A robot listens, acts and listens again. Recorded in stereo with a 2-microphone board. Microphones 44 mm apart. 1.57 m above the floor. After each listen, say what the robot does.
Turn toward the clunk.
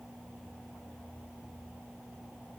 Keep listening.
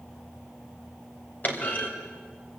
Turn 40° left.
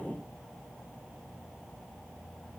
Keep listening.
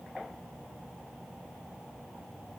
I heard a clunk, but can't make it out now. It was about straight ahead or 100° left.